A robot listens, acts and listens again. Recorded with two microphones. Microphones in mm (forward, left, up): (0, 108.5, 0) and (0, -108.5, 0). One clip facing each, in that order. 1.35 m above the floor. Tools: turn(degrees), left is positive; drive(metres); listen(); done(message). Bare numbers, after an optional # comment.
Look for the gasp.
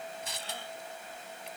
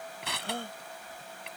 # The gasp: about 55° right or 125° right.
turn(-55)
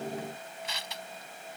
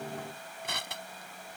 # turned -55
listen()
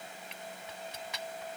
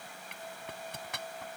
done("I heard a gasp, but can't make it out now. It was about straight ahead or 70° right.")